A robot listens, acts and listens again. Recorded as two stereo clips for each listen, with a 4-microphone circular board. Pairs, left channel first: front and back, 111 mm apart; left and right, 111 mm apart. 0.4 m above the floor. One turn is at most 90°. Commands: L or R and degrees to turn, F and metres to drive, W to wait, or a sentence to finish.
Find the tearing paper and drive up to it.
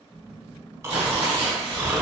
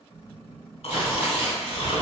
R90
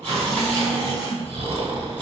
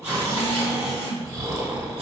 R70
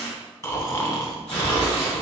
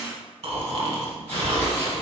L20
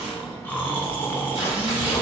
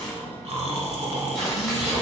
F1.0
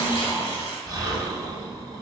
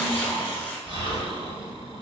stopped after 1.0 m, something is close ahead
L20
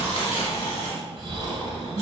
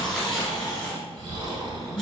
L10
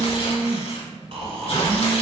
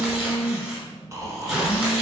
Arrived at the tearing paper, straight ahead.